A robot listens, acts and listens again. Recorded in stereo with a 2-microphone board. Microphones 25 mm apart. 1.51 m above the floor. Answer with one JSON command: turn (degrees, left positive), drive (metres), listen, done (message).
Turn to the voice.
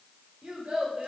{"turn": -50}
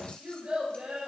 {"turn": -85}
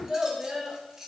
{"turn": -30}
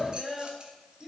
{"turn": -10}
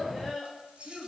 {"done": "Facing the child speaking."}